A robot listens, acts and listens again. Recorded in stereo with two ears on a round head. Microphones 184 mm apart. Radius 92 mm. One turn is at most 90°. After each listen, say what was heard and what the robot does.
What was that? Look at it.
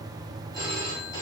The phone ringing: about 20° left or 160° left. Turn 20° left.
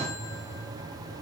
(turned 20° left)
Keep listening.
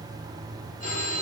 So it is at 140° left. Turn 90° left.
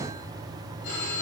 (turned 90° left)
The phone ringing is now 55° left. Turn 55° left.
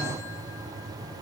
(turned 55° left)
Keep listening.
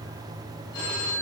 The phone ringing is now 20° left. Turn 20° left.
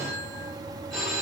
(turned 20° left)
Found it: a phone ringing, straight ahead.